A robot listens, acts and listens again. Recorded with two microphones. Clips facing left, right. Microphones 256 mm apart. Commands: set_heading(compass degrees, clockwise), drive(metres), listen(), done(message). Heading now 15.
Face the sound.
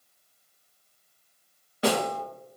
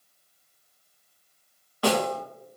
set_heading(355)
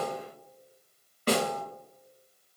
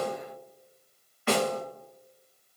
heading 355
set_heading(215)
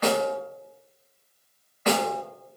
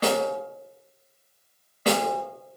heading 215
set_heading(250)
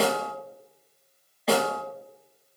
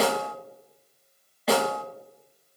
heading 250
done("Facing the snare drum, under 1 m away.")